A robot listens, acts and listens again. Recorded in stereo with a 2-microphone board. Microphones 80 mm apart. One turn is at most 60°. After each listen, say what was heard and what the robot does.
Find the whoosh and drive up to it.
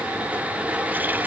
Keep listening.
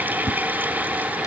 The whoosh: about 35° left or 145° left. Turn 35° left.
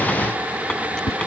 So it is at 110° left. Turn 60° left.
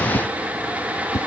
The whoosh is now 40° left. Turn 40° left.
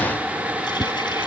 Drive 1.0 m forward.
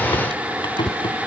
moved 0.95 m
Drive 1.0 m forward.
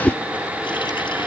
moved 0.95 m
Drive 1.0 m forward.
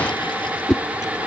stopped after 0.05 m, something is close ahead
I am next to the whoosh.